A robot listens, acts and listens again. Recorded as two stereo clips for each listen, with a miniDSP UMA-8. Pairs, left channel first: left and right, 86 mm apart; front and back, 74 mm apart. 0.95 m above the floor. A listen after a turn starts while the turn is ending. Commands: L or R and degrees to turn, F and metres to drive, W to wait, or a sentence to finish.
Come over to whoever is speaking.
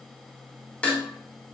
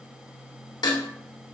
W
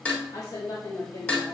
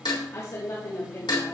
L50
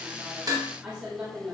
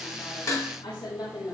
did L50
R15
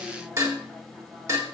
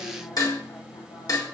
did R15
W
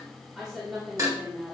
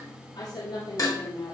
F1.0
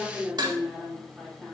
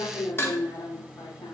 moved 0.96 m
F1.0
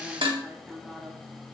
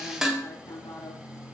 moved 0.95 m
R10
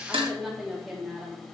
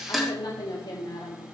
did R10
F1.0
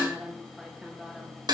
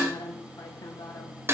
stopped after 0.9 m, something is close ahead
I am next to the woman speaking.